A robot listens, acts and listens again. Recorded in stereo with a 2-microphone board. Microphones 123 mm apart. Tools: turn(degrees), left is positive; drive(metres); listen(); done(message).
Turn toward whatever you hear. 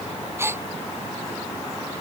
turn(degrees=-20)
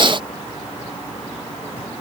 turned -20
listen()
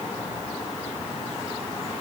done("I heard a gasp, but can't make it out now. It was about straight ahead or 140° right.")